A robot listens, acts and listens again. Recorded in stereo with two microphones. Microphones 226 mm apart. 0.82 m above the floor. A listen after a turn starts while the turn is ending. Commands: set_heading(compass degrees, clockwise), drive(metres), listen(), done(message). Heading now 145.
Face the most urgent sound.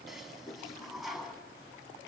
listen()
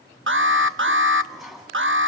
set_heading(205)
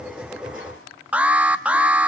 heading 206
done("Facing the alarm, under 1 m away.")